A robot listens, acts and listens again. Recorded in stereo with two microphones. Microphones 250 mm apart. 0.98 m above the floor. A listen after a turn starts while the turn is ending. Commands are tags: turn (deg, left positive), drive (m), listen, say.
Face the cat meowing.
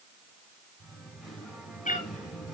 <turn deg="30"/>
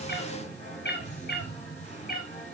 <turn deg="35"/>
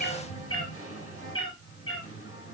<turn deg="120"/>
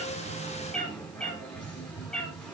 <say>Facing the cat meowing, 2 to 4 m away.</say>